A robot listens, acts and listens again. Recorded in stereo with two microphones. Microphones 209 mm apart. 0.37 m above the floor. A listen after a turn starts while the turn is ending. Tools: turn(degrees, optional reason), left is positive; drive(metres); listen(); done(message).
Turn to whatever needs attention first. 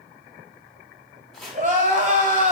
turn(degrees=-40, reason="The crying: about 40° right or 140° right.")
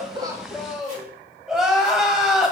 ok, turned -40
done("Facing the crying, 1 to 2 m away.")